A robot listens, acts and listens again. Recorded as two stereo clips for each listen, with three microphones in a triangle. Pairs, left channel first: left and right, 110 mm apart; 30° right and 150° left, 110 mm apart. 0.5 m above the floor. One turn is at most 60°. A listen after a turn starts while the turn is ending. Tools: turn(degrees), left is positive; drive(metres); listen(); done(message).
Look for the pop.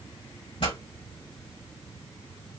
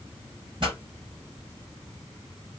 turn(degrees=60)
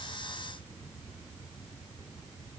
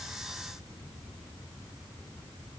turn(degrees=55)
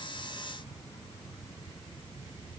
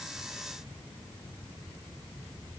done("Facing where the pop came from. I can't hear it now.")